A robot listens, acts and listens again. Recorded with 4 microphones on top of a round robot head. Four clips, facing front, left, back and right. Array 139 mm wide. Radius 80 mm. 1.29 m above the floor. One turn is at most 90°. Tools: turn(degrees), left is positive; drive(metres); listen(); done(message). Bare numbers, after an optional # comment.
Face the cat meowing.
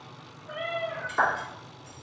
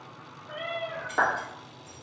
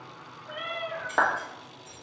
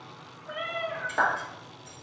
# The cat meowing: 100° right.
turn(-90)
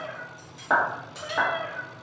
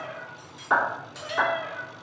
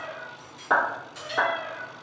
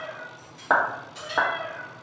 done("Found it: a cat meowing, straight ahead.")